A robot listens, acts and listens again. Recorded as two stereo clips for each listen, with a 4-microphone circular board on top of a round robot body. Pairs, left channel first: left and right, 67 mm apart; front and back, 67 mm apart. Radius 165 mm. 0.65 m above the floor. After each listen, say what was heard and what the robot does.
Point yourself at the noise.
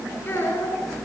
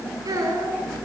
The child speaking: 150° left. Turn 150° left.
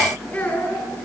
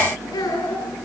The child speaking is now 25° left. Turn 25° left.
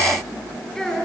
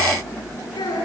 The child speaking is now 10° left. Turn 10° left.
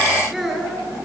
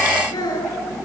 Found it: a child speaking, straight ahead, over 4 m away.